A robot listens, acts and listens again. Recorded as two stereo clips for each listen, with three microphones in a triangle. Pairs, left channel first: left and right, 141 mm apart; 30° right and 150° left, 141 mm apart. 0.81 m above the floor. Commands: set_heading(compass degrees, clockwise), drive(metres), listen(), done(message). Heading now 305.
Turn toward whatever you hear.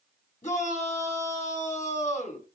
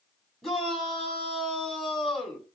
set_heading(245)
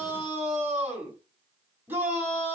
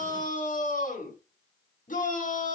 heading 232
set_heading(247)
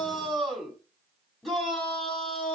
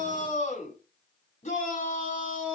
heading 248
done("Facing the shout, over 4 m away.")